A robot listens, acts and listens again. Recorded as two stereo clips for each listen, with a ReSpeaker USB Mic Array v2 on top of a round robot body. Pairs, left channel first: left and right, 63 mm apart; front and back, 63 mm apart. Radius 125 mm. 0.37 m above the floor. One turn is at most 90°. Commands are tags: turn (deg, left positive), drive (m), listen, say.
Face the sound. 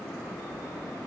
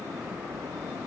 <listen/>
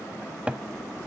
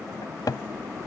<turn deg="-15"/>
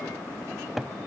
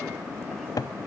<say>Found it: a cupboard door, straight ahead.</say>